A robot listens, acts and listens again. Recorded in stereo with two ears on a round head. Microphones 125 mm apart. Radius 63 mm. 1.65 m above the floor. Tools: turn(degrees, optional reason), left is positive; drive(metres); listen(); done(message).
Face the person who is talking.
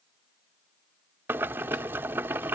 listen()
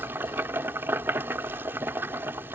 listen()
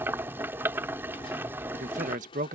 turn(degrees=-60, reason="The man speaking: about 60° right or 120° right.")
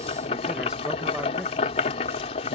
listen()
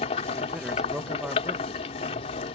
listen()
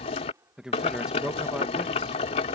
done("Facing the man speaking.")